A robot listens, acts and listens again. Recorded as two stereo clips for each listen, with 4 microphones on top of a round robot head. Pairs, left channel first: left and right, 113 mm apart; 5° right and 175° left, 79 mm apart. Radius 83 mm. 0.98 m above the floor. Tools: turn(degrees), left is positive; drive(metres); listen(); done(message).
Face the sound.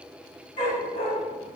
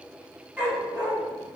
turn(degrees=105)
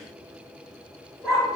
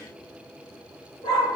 done("Found it: a dog barking, straight ahead, 1 to 2 m away.")